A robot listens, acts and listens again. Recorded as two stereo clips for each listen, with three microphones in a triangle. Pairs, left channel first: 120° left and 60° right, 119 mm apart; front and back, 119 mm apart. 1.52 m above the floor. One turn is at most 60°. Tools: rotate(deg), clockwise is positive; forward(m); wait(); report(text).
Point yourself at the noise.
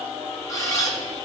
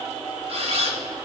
rotate(-60)
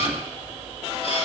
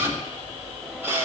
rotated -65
rotate(-60)
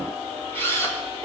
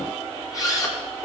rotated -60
rotate(-55)
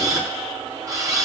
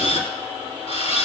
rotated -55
report("Found it: a camera shutter, straight ahead, 2 to 4 m away.")